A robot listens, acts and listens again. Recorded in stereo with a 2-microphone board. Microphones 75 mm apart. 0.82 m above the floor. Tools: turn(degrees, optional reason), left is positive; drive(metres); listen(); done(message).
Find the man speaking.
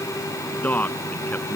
turn(degrees=20, reason="The man speaking: about 20° left or 160° left.")
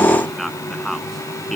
done("Found it: a man speaking, straight ahead.")